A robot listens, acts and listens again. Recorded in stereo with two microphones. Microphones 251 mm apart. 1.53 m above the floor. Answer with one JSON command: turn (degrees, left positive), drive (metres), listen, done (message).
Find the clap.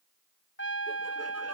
{"listen": true}
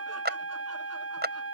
{"turn": -40}
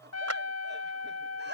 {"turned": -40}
{"listen": true}
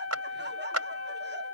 {"turn": -100}
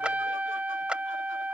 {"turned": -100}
{"listen": true}
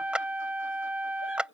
{"done": "Facing the clap."}